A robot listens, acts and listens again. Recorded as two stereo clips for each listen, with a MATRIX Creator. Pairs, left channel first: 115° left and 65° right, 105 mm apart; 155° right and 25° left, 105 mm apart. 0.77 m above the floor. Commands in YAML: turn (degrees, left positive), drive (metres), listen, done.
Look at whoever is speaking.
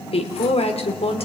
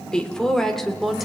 turn: 110
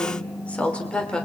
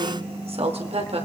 turn: 30
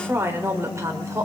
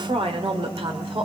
turn: -10
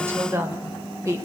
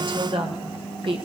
turn: -10
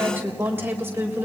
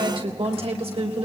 done: "Facing the woman speaking."